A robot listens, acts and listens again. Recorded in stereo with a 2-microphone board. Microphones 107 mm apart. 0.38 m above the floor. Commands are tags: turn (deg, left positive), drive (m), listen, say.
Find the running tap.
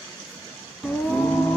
<listen/>
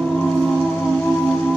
<listen/>
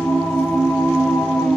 <say>I can't make out a running tap to turn to.</say>